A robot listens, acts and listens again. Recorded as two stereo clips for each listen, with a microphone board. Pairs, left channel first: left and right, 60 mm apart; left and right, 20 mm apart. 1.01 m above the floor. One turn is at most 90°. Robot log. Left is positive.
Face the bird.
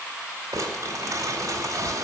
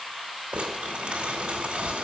cmd idle
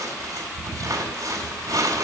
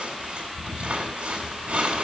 cmd idle
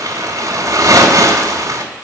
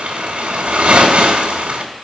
end: I can't make out a bird, only crumpling.